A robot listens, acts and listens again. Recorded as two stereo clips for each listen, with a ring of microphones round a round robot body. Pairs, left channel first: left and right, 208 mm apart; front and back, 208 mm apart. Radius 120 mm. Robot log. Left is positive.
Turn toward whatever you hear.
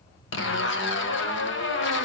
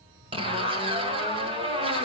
note: The zipper: 115° left.
cmd yaw +115
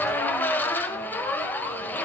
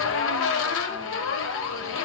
note: The zipper is now 10° left.
cmd yaw +10
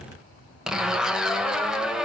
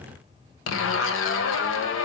end: Facing the zipper.